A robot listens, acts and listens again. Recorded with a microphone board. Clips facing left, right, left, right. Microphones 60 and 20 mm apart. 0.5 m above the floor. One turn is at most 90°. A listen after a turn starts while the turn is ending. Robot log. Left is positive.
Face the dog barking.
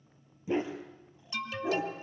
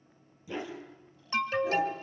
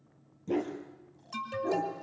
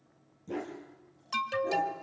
note: The dog barking: about 25° left or 155° left.
cmd yaw +25
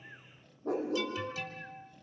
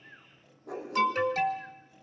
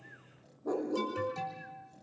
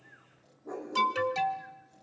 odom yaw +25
note: So it is at 130° left.
cmd yaw +90
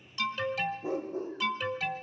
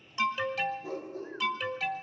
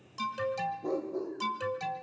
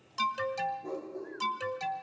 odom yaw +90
note: The dog barking is now 30° left.
cmd yaw +30
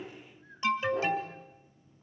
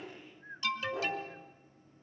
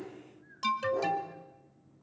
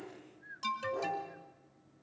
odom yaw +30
cmd idle
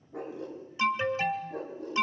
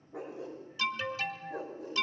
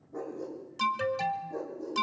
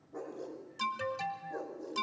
end: Facing the dog barking, over 4 m away.